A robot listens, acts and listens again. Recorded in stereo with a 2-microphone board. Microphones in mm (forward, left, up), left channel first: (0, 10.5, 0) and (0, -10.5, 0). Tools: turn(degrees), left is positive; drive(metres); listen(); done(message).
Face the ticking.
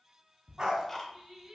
turn(degrees=15)
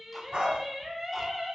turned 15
listen()
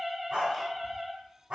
listen()
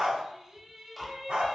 done("Facing the ticking, under 1 m away.")